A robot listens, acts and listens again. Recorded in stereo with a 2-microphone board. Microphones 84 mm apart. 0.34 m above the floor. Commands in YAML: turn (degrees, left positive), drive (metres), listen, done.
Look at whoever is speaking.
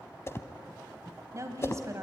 turn: -40
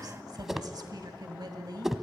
turn: -90
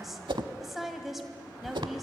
done: "Found it: a woman speaking, straight ahead, 1 to 2 m away."